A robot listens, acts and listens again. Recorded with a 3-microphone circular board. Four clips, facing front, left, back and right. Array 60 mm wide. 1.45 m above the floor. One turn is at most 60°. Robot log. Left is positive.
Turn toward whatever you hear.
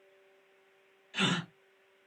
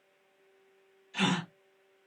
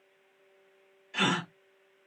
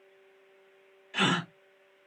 note: The gasp: 120° right.
cmd yaw -60
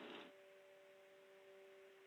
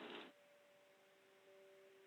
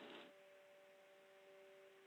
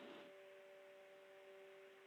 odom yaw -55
note: Nothing new. It was at 65° right.
cmd yaw -60
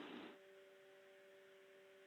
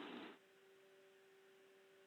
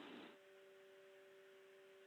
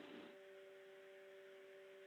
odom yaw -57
note: Nothing new. It was at 10° right.
cmd yaw -10
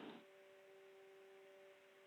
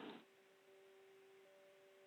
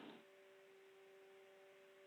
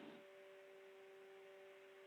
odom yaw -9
end: Facing where the gasp came from. I can't hear it now.